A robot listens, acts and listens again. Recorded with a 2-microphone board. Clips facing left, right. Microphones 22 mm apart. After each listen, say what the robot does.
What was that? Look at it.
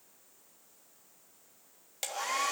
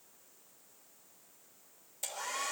Turn 75° left.
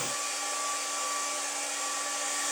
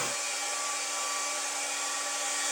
Found it: a hair dryer, straight ahead.